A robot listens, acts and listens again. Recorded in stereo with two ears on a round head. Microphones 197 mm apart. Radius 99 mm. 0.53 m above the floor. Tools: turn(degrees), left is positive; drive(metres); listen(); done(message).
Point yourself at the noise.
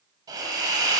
turn(degrees=-20)
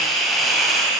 done("Found it: a hiss, straight ahead.")